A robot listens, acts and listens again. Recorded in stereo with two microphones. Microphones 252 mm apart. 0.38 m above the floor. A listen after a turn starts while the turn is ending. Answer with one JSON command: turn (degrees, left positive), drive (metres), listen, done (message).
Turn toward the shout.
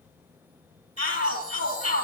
{"turn": -65}
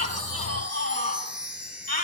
{"turn": -50}
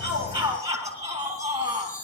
{"turn": -15}
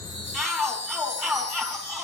{"done": "Facing the shout, over 4 m away."}